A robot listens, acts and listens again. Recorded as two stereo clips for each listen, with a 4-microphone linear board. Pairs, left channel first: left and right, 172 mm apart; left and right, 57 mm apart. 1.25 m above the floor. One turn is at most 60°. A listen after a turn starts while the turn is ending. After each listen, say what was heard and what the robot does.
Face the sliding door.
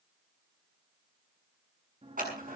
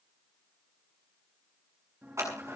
The sliding door: about 35° right or 145° right. Turn 35° right.
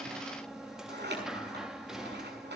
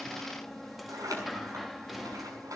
Facing the sliding door.